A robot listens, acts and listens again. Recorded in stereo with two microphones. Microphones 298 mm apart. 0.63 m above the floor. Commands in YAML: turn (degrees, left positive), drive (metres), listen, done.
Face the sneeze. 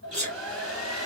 turn: -25
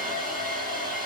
listen: true
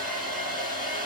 done: "I heard a sneeze, but can't make it out now. It was about straight ahead or 130° right."